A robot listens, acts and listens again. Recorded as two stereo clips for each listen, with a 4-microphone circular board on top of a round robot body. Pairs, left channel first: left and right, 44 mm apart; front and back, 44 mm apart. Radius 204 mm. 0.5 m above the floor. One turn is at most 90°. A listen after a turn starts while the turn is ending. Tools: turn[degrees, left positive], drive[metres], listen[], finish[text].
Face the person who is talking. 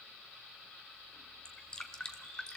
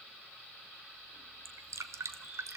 Action: listen[]
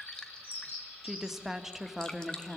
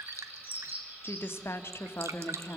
Thought: The woman speaking: 10° right.
Action: turn[-10]
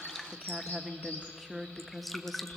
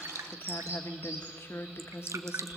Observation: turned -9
Action: finish[Found it: a woman speaking, straight ahead.]